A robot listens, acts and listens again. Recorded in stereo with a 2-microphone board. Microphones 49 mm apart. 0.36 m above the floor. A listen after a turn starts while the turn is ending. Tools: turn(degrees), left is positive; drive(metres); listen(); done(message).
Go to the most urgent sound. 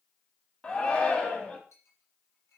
turn(degrees=20)
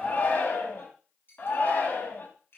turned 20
turn(degrees=140)
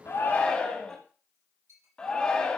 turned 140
turn(degrees=20)
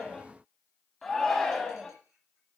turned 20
drive(metres=1.0)
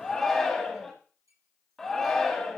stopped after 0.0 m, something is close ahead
turn(degrees=10)
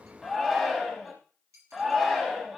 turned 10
done("Something is in my way. I am facing the shout but have not reached it.")